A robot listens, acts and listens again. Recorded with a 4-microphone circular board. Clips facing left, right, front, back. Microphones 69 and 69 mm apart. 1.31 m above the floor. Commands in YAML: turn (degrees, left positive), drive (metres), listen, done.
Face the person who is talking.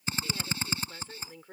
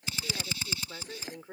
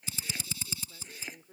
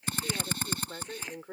turn: -165
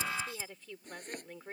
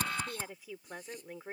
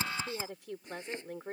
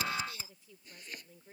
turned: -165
turn: -10
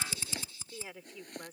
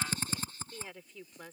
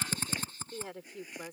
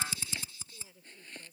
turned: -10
done: "Found it: a woman speaking, straight ahead."